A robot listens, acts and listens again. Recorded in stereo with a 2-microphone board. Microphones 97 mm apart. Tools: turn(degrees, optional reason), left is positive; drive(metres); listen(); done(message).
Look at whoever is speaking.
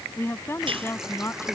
turn(degrees=25, reason="The woman speaking: about 25° left or 155° left.")
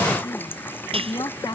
turn(degrees=125, reason="So it is at 125° left.")
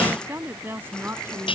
turn(degrees=-25, reason="The woman speaking is now 25° right.")
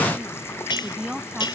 turn(degrees=-10, reason="The woman speaking is now 10° right.")
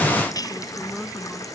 listen()
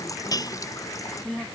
done("Found it: a woman speaking, straight ahead.")